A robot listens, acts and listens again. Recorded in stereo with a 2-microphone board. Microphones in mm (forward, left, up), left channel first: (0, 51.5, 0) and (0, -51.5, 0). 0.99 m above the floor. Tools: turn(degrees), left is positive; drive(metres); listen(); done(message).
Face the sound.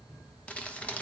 turn(degrees=30)
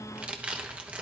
turn(degrees=-15)
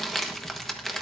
done("Found it: crumpling, straight ahead.")